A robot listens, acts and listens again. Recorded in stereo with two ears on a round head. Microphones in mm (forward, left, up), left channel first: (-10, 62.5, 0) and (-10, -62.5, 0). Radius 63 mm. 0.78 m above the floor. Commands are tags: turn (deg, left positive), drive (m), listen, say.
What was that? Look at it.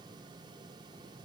<listen/>
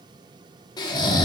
<turn deg="30"/>
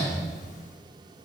<listen/>
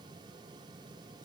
<listen/>
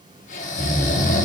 <turn deg="120"/>
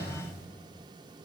<listen/>
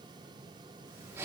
<turn deg="-20"/>
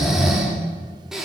<say>Facing the snoring.</say>